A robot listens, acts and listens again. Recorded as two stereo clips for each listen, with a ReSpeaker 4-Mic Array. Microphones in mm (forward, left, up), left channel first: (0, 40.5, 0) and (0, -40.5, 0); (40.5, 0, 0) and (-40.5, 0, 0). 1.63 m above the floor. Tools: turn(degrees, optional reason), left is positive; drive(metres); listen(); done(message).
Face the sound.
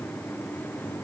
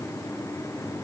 listen()
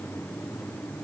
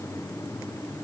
listen()
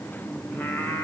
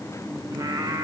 turn(degrees=150, reason="The singing: 150° left.")
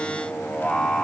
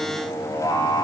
turn(degrees=10, reason="The singing is now 10° left.")
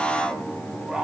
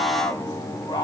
turn(degrees=-10, reason="The singing is now 10° right.")
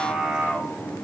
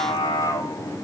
done("Facing the singing, 2 to 4 m away.")